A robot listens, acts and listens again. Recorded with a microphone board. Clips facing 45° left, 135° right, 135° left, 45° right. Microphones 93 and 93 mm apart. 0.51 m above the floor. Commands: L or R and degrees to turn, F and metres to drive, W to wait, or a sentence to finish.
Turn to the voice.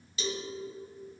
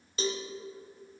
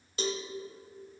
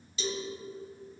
W
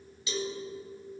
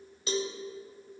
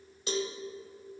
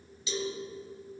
W
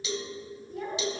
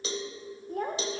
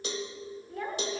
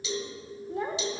R110
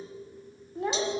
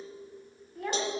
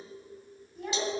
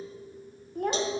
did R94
R20
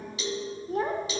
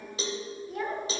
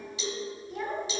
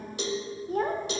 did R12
Facing the child speaking, 1 to 2 m away.